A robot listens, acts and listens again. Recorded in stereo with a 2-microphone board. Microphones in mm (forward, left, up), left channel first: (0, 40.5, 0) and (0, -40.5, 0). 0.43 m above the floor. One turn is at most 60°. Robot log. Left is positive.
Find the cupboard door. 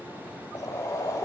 cmd idle
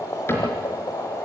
note: The cupboard door: about 30° left or 150° left.
cmd yaw +30
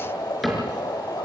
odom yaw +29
end: Facing the cupboard door, over 4 m away.